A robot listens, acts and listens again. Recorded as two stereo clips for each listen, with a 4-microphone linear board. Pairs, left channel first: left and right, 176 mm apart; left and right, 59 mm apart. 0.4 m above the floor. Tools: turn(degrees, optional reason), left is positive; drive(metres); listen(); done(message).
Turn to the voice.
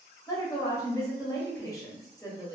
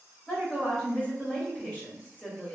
turn(degrees=20, reason="The woman speaking: about 20° left or 160° left.")
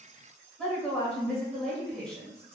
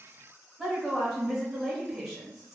done("Facing the woman speaking.")